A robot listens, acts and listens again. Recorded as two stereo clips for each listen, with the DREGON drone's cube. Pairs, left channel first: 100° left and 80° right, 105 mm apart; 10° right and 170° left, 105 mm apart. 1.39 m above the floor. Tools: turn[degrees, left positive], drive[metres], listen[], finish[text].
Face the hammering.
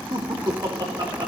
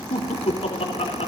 Action: listen[]
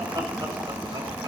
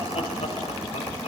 Action: listen[]
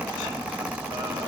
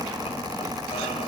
Action: finish[I can't make out hammering to turn to.]